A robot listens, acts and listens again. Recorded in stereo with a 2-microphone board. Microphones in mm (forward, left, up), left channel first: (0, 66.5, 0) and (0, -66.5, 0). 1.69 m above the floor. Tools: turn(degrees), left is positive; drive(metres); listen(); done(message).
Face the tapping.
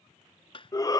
turn(degrees=40)
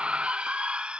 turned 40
listen()
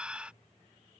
listen()
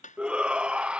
turn(degrees=100)
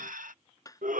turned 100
turn(degrees=25)
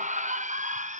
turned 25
listen()
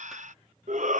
listen()
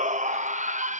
done("I heard tapping from this way, but can't make it out now.")